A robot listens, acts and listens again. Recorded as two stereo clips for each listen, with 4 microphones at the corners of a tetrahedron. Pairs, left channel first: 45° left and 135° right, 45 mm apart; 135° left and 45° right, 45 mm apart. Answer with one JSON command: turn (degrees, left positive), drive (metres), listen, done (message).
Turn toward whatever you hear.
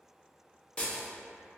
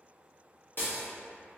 {"turn": 110}
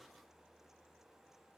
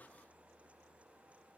{"done": "I heard breaking glass from this way, but can't make it out now."}